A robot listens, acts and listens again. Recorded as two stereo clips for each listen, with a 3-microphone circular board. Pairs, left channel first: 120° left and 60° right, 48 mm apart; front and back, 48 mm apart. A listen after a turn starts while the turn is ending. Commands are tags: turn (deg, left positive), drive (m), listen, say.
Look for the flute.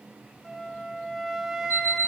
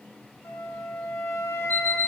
<turn deg="25"/>
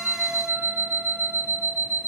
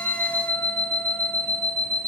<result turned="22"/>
<listen/>
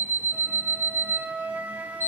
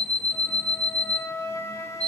<say>Found it: a flute, straight ahead, under 1 m away.</say>